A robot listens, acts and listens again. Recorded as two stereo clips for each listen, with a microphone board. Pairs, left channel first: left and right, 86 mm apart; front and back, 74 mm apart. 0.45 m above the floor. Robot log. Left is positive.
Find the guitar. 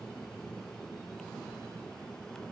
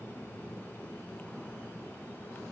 cmd idle
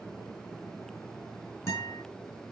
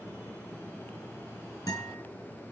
note: The guitar: 40° left.
cmd yaw +40
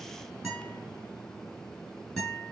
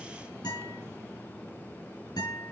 note: The guitar is now 10° left.
cmd yaw +10
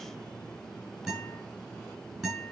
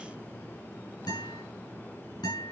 end: Found it: a guitar, straight ahead.